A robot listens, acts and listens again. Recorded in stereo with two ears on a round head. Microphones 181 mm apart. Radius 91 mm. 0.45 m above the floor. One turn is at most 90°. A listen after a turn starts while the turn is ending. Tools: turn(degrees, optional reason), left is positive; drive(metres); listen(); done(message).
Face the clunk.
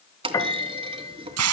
turn(degrees=-25, reason="The clunk: about 25° right or 155° right.")
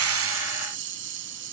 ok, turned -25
listen()
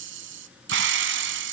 done("I heard a clunk, but can't make it out now. It was about straight ahead or 130° right.")